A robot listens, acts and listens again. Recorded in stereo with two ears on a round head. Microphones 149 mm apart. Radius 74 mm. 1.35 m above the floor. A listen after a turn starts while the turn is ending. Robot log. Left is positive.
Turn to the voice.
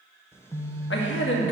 cmd yaw +90
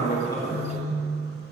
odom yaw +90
cmd idle
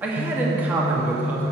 note: The man speaking is now 10° right.
cmd yaw -10
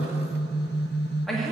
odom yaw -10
end: Found it: a man speaking, straight ahead, 2 to 4 m away.